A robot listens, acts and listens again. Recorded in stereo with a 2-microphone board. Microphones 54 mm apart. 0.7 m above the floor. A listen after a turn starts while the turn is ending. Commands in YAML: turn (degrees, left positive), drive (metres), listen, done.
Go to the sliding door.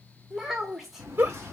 turn: -60
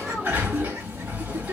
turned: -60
turn: -35
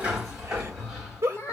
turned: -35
turn: -15
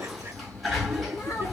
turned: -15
drive: 1.0
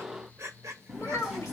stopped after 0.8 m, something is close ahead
turn: -15
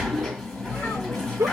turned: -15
done: "Arrived at the sliding door, straight ahead."